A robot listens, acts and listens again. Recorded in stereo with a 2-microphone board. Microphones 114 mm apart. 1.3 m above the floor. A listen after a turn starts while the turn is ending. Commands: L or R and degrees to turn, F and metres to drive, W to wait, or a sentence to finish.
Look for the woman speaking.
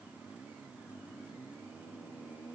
W
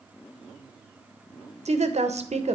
R90
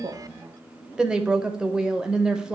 R10
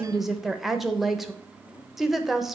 Found it: a woman speaking, straight ahead, under 1 m away.